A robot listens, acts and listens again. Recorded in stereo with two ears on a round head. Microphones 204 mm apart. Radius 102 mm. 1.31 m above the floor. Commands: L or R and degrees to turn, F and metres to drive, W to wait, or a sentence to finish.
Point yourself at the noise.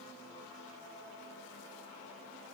W
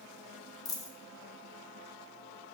L15
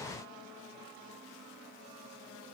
W
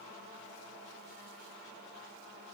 I heard a dropped coin, but can't make it out now. It was about straight ahead or 150° left.